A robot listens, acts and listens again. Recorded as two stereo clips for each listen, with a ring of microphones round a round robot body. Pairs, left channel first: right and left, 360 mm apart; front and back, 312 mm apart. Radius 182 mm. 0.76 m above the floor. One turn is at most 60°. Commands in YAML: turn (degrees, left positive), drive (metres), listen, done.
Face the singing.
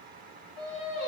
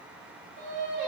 turn: -60
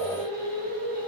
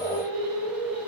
turn: -60
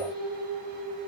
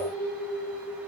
done: "Found it: singing, straight ahead."